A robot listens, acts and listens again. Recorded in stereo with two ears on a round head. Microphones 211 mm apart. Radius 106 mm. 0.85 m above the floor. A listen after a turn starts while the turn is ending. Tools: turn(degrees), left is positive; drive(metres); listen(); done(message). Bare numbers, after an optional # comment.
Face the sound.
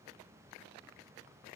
listen()
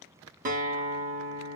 # The guitar: about 35° right or 145° right.
turn(-35)
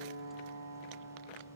# So it is at 110° right.
turn(-110)
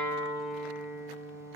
done("Found it: a guitar, straight ahead.")